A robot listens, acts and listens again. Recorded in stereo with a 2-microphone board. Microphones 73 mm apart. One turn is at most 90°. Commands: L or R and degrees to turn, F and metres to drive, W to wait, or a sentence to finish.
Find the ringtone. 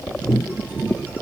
W
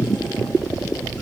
W
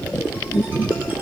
I can't make out a ringtone to turn to.